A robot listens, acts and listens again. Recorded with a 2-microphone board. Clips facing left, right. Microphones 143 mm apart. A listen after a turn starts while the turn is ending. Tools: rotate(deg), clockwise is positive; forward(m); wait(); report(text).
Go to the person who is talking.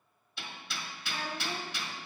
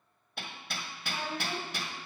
rotate(25)
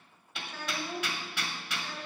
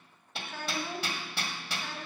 rotate(125)
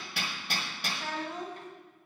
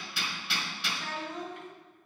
rotate(-40)
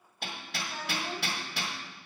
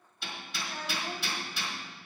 rotate(-10)
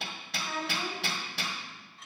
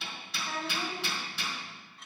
forward(1.0)
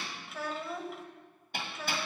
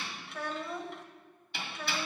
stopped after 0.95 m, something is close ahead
report("I am next to the child speaking.")